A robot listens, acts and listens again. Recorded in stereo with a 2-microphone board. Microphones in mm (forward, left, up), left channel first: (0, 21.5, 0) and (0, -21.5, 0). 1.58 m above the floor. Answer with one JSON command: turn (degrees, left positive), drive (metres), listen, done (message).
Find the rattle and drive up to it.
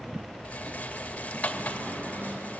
{"turn": 30}
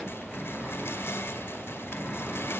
{"listen": true}
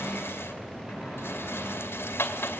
{"turn": 115}
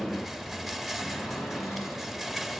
{"drive": 1.0}
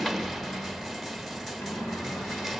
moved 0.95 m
{"drive": 1.0}
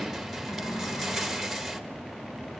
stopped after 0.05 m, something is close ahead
{"done": "I am next to the rattle."}